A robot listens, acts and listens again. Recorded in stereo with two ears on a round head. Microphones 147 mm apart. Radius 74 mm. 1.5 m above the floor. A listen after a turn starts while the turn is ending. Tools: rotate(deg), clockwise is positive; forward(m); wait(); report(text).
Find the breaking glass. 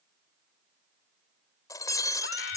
rotate(-20)
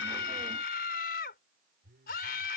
wait()
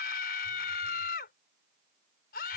report("I heard breaking glass, but can't make it out now. It was about straight ahead or 140° left.")